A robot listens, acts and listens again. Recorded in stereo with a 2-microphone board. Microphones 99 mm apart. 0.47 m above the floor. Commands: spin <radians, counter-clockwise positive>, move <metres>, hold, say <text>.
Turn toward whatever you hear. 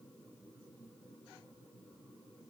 hold
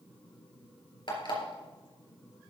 spin 0.87
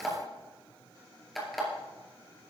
say Facing the alarm clock.